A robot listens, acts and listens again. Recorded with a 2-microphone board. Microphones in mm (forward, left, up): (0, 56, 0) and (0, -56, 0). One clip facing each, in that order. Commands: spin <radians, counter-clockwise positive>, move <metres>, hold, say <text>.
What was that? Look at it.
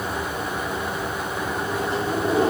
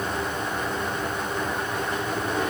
spin 0.61
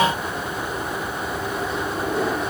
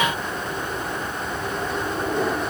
say Facing the microwave.